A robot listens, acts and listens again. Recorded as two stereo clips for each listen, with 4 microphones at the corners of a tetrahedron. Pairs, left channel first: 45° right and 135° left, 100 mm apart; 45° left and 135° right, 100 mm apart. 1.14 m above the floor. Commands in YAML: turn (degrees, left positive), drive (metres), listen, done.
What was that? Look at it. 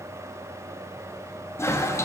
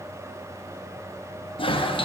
turn: 15
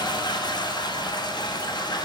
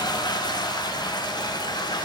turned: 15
done: "Found it: a toilet flushing, straight ahead."